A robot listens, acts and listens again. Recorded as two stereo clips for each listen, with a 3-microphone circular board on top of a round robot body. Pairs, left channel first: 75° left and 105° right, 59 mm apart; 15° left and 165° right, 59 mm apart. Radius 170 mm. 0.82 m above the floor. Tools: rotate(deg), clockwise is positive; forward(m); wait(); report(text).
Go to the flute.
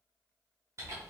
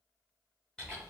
wait()
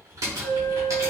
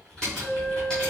rotate(-70)
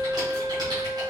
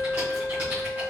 rotate(-35)
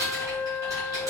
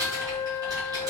rotate(10)
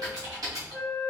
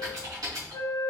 forward(1.0)
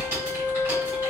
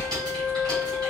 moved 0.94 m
wait()
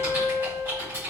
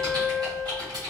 forward(1.0)
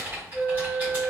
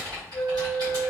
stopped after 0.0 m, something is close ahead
report("Arrived at the flute, straight ahead.")